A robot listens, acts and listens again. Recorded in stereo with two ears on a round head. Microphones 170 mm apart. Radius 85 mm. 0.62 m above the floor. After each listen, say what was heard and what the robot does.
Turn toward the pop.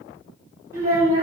Keep listening.
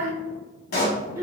The pop: about 50° left or 130° left. Turn 50° left.
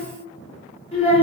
Keep listening.
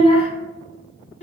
I heard a pop, but can't make it out now. It was about straight ahead or 80° left.